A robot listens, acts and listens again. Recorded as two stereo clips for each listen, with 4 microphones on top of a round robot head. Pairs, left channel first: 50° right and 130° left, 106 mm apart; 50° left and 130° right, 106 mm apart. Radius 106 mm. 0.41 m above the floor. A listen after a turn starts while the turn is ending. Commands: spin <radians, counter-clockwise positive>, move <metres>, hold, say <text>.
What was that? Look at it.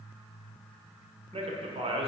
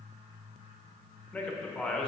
spin 2.36
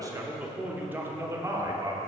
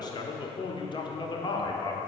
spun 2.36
spin 1.48
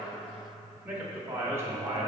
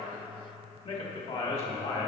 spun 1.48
spin 1.13
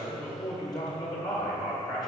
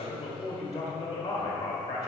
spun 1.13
say Found it: a man speaking, straight ahead.